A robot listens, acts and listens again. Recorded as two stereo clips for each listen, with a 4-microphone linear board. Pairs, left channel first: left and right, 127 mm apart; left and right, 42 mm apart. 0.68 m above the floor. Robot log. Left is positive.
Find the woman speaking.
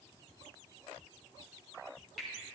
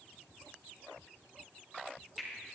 cmd idle
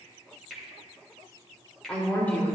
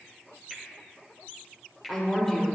cmd yaw +30
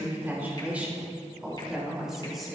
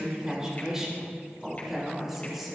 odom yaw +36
end: Facing the woman speaking, 2 to 4 m away.